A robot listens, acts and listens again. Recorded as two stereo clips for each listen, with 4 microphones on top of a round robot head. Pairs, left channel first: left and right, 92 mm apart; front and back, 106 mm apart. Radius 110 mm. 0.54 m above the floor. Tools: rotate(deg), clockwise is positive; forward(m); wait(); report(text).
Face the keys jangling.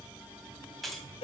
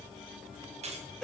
rotate(-180)
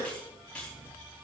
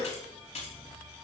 rotate(-10)
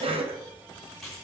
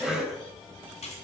report("Found it: keys jangling, straight ahead, 2 to 4 m away.")